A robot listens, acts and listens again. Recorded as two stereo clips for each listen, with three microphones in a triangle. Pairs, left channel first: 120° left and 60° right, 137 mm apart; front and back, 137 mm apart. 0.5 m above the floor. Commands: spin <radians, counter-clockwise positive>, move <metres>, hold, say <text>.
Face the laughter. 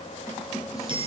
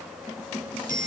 hold
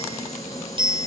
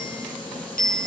hold
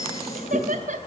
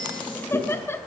spin -1.22
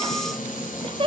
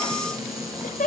spin -0.17
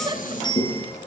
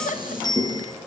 hold
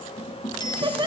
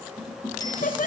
say Found it: laughter, straight ahead.